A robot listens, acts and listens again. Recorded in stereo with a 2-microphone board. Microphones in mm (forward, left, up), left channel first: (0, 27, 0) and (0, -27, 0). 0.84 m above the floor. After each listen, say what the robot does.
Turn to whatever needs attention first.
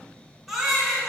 Turn 30° right.
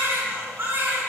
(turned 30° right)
Turn 145° right.
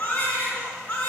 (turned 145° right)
Turn 25° left.
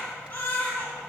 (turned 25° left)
Turn 25° left.
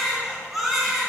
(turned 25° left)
Facing the baby crying, over 4 m away.